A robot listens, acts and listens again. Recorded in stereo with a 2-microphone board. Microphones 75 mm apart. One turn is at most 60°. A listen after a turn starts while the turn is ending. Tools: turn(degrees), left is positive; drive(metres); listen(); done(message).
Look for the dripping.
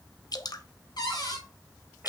turn(degrees=55)
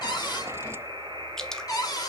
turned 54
done("Facing the dripping, under 1 m away.")